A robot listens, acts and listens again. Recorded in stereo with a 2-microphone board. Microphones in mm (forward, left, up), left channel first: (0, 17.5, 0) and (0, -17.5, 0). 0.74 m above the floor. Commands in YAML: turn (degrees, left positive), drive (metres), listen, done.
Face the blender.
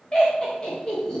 listen: true
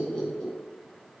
listen: true
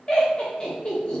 done: "I can't make out a blender to turn to."